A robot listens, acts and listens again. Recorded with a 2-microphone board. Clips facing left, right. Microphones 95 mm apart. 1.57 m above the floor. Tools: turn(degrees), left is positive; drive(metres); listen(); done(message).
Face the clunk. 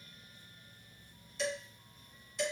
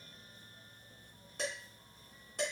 listen()
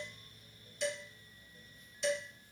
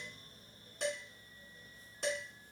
listen()
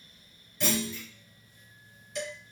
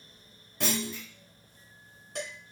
turn(degrees=-90)
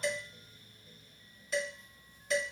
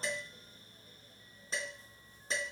done("I heard a clunk from this way, but can't make it out now.")